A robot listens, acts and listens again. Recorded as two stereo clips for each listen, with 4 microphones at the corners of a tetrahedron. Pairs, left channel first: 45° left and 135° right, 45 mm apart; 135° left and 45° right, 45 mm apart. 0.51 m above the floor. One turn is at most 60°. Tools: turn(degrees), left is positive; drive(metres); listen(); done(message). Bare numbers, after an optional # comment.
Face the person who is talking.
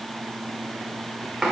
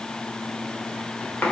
listen()
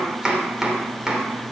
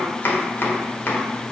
listen()
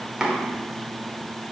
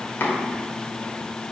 done("I can't make out anyone speaking to turn to.")